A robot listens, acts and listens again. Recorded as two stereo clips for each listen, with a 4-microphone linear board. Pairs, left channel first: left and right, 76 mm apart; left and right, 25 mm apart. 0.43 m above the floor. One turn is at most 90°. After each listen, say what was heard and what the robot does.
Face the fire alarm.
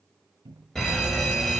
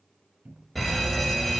Turn 30° left.
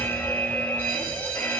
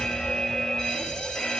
So it is at 140° left. Turn 90° left.
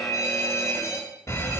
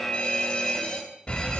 The fire alarm is now 50° left. Turn 50° left.
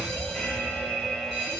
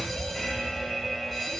The fire alarm is now 10° left. Turn 10° left.
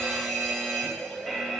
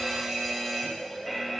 Found it: a fire alarm, straight ahead, 2 to 4 m away.